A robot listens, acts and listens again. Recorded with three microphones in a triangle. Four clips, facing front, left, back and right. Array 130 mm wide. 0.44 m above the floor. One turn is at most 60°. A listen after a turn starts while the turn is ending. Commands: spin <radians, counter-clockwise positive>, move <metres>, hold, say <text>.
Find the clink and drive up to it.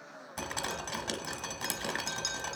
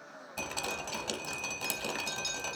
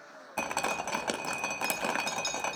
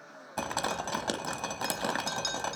spin -0.96
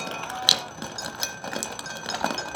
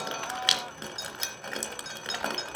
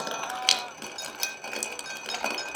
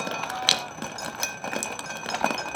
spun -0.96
move 1.0
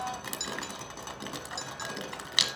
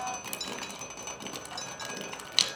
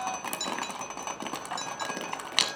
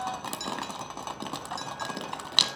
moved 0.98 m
move 1.0
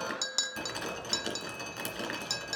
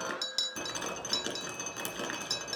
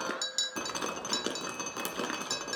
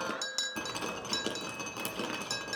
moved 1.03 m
move 1.0
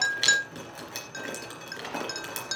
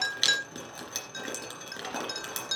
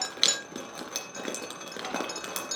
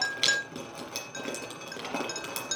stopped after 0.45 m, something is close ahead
say Arrived at the clink, straight ahead.